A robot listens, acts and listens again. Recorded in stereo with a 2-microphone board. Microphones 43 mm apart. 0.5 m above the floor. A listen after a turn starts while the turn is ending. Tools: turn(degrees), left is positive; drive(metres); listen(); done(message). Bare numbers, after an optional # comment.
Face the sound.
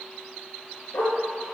turn(90)
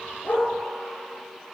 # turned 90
listen()
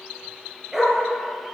# The dog barking is now 15° right.
turn(-15)
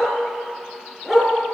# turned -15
# The dog barking is now 15° right.
turn(-15)
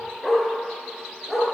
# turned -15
# The dog barking is now 15° right.
turn(-15)
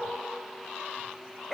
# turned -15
done("Facing the dog barking, 2 to 4 m away.")